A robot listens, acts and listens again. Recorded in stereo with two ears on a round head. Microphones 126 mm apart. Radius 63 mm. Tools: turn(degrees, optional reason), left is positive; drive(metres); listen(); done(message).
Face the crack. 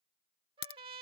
turn(degrees=90)
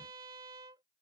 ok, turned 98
turn(degrees=-10, reason="Nothing new. It was at 10° right.")
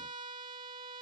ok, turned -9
done("Facing where the crack came from. I can't hear it now.")